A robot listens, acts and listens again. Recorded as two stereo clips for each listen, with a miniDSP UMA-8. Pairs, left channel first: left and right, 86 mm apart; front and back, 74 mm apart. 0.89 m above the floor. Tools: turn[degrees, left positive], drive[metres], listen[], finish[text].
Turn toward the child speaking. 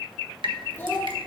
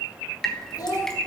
Thought: The child speaking: 30° left.
Action: turn[30]
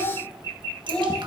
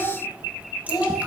Thought: The child speaking is now 15° left.
Action: turn[15]
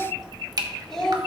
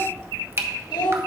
Action: finish[Found it: a child speaking, straight ahead.]